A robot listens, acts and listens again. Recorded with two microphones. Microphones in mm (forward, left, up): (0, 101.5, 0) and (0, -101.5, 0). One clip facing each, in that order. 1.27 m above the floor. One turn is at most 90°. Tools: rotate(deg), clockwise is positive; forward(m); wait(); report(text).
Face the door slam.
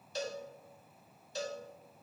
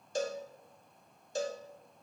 wait()
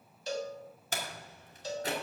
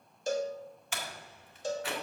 rotate(-40)
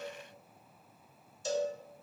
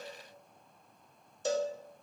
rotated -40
wait()
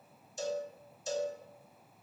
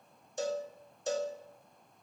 report("I heard a door slam, but can't make it out now. It was about straight ahead or 100° left.")